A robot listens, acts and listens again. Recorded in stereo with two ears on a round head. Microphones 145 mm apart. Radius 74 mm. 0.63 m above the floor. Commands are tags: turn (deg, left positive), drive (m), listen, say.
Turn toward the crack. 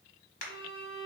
<turn deg="50"/>
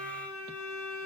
<listen/>
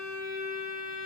<say>I heard a crack, but can't make it out now. It was about straight ahead or 80° left.</say>